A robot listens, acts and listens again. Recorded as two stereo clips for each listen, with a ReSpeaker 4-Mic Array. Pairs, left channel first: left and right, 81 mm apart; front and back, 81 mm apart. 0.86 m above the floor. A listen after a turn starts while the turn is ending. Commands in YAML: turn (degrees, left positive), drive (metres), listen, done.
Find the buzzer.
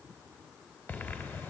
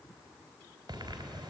listen: true
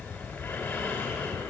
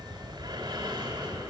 listen: true
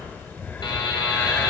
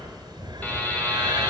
turn: 70
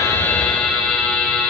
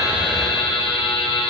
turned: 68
done: "Facing the buzzer."